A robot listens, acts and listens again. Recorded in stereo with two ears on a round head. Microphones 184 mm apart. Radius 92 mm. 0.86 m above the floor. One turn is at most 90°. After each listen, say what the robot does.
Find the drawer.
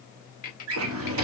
Turn 75° right.
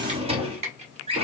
Turn 30° right.
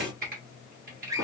Turn 20° right.
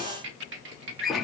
Found it: a drawer, straight ahead.